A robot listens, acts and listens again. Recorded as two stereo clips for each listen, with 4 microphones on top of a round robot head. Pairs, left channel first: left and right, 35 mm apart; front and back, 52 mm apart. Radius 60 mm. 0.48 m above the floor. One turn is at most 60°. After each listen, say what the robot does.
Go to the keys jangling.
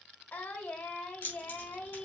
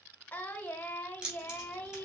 Turn 60° left.
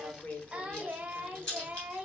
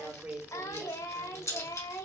Turn 20° left.
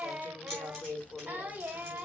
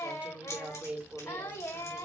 Keep listening.
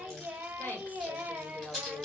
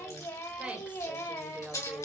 Drive 1.0 m forward.
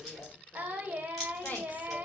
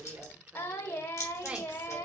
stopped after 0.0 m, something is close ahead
Blocked. The keys jangling is further on, straight ahead.